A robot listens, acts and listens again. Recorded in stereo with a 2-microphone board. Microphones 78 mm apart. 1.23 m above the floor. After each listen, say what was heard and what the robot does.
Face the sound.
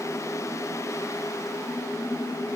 Keep listening.
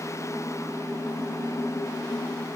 Keep listening.
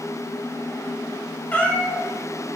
The cat meowing: about 15° left or 165° left. Turn 15° left.
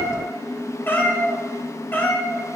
The cat meowing: about 25° left or 155° left. Turn 25° left.
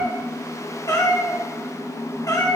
So it is at 135° left. Turn 135° left.
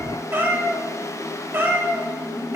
The cat meowing is now 30° right. Turn 30° right.
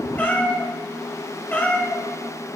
The cat meowing is now 20° left. Turn 20° left.
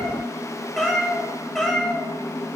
Facing the cat meowing.